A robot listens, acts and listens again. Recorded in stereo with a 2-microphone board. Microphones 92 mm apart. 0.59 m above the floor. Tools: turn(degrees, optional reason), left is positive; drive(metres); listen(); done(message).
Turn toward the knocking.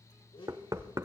turn(degrees=-40, reason="The knocking: about 40° right or 140° right.")
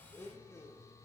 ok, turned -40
listen()
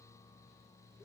listen()
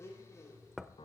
done("Found it: knocking, straight ahead.")